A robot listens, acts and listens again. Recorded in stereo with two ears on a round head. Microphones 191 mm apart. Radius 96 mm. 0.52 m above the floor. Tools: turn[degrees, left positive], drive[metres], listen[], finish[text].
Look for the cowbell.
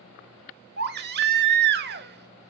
Action: listen[]
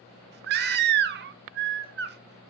Action: listen[]
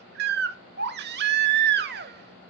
Action: finish[I can't make out a cowbell to turn to.]